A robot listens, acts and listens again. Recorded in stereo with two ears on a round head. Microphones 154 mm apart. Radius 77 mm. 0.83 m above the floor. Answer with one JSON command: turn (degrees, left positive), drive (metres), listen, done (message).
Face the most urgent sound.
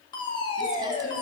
{"turn": 30}
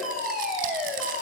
{"done": "Found it: a fire alarm, straight ahead."}